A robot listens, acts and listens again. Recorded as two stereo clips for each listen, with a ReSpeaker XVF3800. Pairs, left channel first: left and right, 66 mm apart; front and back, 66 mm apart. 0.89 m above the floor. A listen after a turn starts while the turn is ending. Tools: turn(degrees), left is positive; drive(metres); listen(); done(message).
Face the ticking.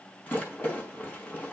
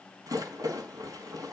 listen()
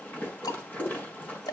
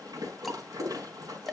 turn(degrees=90)
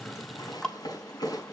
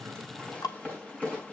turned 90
turn(degrees=10)
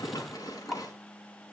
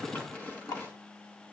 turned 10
done("Found it: ticking, straight ahead, 1 to 2 m away.")